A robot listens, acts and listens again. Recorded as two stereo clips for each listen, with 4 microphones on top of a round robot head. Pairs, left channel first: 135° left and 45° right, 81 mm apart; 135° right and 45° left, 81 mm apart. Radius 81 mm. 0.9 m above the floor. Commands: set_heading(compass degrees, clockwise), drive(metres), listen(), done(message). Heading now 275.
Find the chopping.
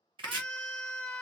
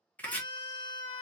set_heading(340)
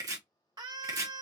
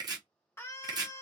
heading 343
done("Found it: chopping, straight ahead.")